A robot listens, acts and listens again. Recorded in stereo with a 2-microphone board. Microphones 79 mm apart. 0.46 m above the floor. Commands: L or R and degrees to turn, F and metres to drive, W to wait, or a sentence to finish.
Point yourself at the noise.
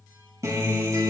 R40
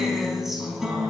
Found it: a guitar, straight ahead.